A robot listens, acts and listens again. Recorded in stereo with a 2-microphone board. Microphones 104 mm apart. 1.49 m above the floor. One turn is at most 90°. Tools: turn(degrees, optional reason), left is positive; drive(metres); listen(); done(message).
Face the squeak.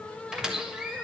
turn(degrees=-30)
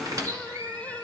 turn(degrees=-90, reason="So it is at 145° right.")
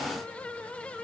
turn(degrees=-55, reason="Nothing new. It was at 55° right.")
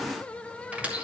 turn(degrees=-15, reason="The squeak is now 15° right.")
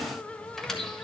done("Found it: a squeak, straight ahead, 1 to 2 m away.")